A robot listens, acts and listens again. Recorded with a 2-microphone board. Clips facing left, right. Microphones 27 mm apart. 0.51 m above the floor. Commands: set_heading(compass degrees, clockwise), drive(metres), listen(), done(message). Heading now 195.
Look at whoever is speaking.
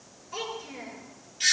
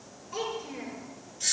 set_heading(165)
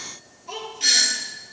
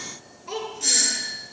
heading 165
set_heading(190)
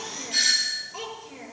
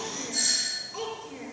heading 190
done("Facing the child speaking.")